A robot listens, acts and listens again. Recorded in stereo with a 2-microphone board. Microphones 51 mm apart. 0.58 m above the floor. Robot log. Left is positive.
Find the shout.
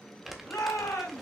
cmd yaw +90
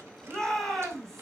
end: Found it: a shout, straight ahead, over 4 m away.